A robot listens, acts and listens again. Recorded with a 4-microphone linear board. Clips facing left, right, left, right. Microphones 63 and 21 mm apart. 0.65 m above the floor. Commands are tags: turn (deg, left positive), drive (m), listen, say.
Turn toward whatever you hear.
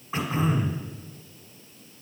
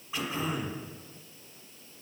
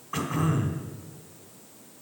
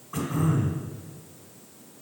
<turn deg="40"/>
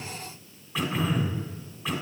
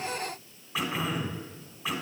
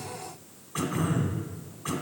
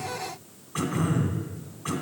<say>Facing the throat clearing.</say>